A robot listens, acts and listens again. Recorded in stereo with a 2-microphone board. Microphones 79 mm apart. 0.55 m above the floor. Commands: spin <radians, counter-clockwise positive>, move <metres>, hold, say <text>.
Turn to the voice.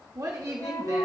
spin -0.79
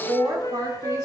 spin -1.31
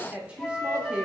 spin -0.35
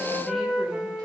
hold
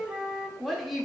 say Facing the woman speaking.